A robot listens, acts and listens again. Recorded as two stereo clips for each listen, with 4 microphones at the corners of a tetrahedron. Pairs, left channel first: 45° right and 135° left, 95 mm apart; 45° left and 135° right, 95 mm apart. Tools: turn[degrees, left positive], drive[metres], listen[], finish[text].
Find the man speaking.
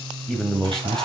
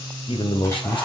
Thought: The man speaking: 40° left.
Action: turn[40]
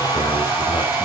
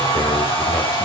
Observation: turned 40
Action: listen[]
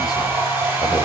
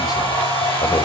Action: listen[]
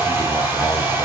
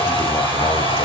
Action: finish[I heard a man speaking from this way, but can't make it out now.]